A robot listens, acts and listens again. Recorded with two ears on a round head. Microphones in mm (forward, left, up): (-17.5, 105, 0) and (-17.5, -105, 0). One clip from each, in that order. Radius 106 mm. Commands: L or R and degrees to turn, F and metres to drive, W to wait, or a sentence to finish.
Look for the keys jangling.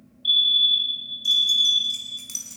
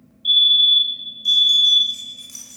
L35
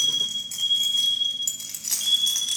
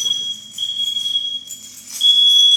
L100
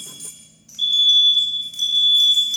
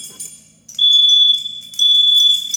R20
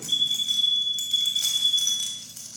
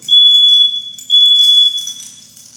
Facing the keys jangling, 2 to 4 m away.